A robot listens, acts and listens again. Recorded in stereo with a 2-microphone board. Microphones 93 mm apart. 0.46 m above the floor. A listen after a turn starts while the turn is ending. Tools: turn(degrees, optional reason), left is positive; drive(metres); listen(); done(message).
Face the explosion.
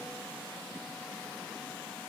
listen()
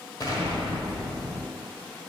turn(degrees=45, reason="The explosion: about 45° left or 135° left.")
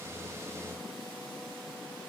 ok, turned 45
listen()
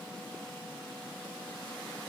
done("I heard an explosion, but can't make it out now. It was about straight ahead or 90° left.")